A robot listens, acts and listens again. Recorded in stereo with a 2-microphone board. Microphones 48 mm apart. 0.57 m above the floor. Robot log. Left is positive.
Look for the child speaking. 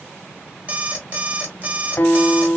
cmd idle
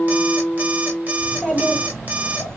cmd yaw +30
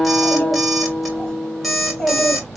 note: The child speaking: about 25° left or 155° left.
cmd yaw +25
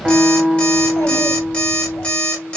note: So it is at 135° left.
cmd yaw +135
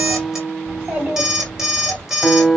note: The child speaking is now 35° right.
cmd yaw -35
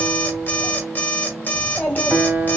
note: The child speaking is now 10° left.
cmd yaw +10
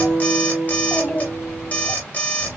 end: Facing the child speaking, 2 to 4 m away.